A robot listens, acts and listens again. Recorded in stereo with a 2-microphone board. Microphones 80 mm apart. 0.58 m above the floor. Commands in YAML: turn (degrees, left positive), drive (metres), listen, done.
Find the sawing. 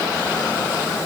listen: true
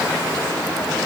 listen: true
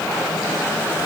done: "I can't make out sawing."